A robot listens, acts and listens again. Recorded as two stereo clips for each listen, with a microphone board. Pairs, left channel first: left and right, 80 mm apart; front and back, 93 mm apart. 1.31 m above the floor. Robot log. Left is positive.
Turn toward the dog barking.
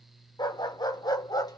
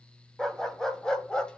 note: The dog barking: 80° left.
cmd yaw +80
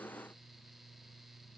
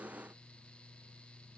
cmd idle
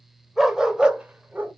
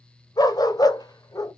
note: The dog barking is now 30° right.
cmd yaw -30
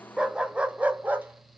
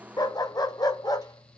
note: The dog barking is now 30° right.
cmd yaw -30
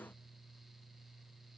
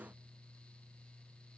cmd idle
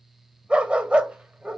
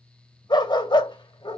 note: The dog barking is now 15° right.
cmd yaw -15
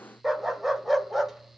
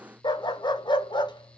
end: Facing the dog barking, 1 to 2 m away.